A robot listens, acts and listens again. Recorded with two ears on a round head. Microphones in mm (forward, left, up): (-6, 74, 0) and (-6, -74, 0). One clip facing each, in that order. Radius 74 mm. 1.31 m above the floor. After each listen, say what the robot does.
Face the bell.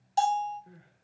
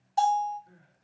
Turn 40° left.
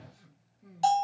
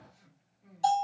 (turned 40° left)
Turn 95° left.
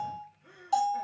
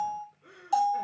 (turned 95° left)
Found it: a bell, straight ahead, 1 to 2 m away.